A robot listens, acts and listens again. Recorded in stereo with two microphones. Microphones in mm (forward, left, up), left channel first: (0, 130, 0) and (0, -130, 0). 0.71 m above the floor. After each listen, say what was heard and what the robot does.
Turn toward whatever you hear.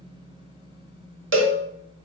The cowbell: about 50° right or 130° right. Turn 50° right.
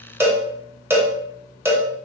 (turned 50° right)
So it is at 10° right. Turn 10° right.
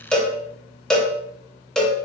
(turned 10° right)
Facing the cowbell.